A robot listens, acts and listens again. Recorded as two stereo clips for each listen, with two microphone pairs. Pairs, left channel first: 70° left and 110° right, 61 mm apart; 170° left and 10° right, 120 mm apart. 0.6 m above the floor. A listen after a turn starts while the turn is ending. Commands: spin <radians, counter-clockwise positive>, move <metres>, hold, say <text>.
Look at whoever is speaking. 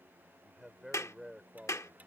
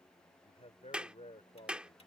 spin 2.79
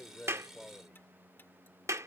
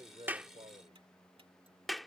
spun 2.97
spin -0.17
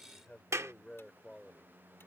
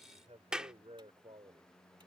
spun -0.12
say Found it: a man speaking, straight ahead.